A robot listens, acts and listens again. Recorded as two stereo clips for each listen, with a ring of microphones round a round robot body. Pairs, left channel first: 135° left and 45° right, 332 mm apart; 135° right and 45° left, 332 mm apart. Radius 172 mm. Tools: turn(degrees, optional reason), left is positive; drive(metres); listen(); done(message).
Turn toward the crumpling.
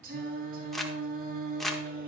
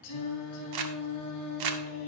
turn(degrees=45, reason="The crumpling: 45° left.")
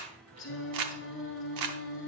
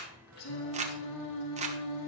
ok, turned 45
turn(degrees=-25, reason="The crumpling is now 25° right.")
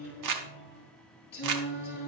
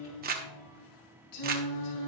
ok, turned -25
turn(degrees=-20, reason="The crumpling is now 20° right.")
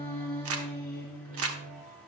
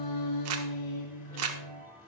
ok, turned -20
done("Found it: crumpling, straight ahead.")